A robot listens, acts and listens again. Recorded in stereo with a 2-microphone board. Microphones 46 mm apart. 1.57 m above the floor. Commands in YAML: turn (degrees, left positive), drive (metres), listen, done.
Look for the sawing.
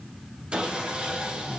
turn: -25
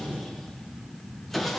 done: "Facing the sawing."